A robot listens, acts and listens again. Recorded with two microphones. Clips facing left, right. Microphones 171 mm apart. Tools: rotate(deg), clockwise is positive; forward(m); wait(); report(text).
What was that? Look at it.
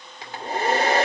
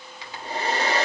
rotate(-50)
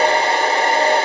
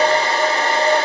rotate(-70)
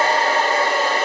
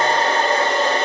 rotate(-10)
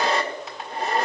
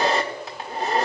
report("Facing the hair dryer, 1 to 2 m away.")